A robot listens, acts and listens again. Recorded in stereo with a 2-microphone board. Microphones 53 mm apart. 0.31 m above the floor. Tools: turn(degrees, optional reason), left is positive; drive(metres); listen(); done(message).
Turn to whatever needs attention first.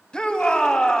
turn(degrees=15, reason="The shout: about 15° left or 165° left.")
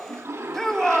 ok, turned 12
done("Found it: a shout, straight ahead.")